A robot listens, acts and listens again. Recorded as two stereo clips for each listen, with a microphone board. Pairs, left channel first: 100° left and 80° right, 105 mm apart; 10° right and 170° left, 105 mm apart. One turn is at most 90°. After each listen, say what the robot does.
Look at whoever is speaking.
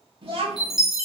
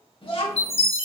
Turn 50° right.
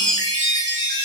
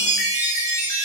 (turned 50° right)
Keep listening.
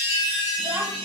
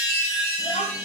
Facing the child speaking, 1 to 2 m away.